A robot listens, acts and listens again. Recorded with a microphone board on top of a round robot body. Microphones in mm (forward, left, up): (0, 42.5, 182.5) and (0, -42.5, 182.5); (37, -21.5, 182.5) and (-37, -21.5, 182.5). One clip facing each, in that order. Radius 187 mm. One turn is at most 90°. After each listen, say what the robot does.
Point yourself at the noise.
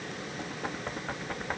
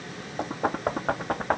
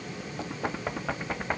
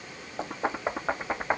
Turn 90° right.
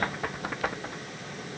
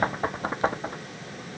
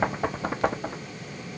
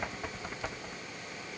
Turn 35° right.
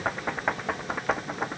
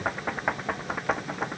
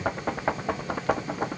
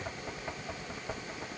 Facing the knocking.